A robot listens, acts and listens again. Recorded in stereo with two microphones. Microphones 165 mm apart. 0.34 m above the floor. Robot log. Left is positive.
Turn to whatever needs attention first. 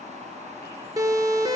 note: The siren: about 20° right or 160° right.
cmd yaw -20
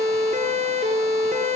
note: So it is at 135° right.
cmd yaw -135
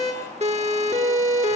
note: The siren is now 45° right.
cmd yaw -45
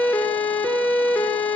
note: The siren is now 10° left.
cmd yaw +10
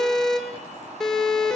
end: Facing the siren.